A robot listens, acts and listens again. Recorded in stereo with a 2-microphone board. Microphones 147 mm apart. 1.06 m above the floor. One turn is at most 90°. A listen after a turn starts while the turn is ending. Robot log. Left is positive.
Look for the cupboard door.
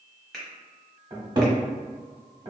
note: The cupboard door: about 30° right or 150° right.
cmd yaw -30
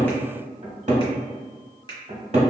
note: So it is at 115° right.
cmd yaw -90
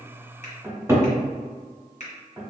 note: The cupboard door is now 20° right.
cmd yaw -20
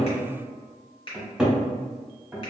end: Found it: a cupboard door, straight ahead.